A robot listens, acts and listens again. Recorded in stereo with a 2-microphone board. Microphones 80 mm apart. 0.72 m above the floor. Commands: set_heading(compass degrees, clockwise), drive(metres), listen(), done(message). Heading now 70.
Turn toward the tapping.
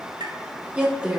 set_heading(135)
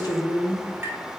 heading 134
set_heading(164)
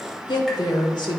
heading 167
listen()
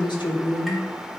listen()
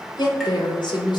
done("Facing where the tapping came from. I can't hear it now.")